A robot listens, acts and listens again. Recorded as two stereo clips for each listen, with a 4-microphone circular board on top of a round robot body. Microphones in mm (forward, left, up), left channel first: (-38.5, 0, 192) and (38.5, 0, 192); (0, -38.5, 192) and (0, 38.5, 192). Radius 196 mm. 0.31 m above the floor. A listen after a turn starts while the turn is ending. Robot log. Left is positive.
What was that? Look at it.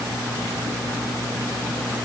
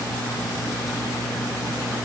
cmd idle
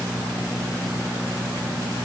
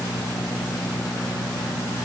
cmd idle
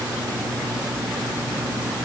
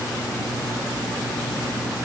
end: I can't make out anything to turn to.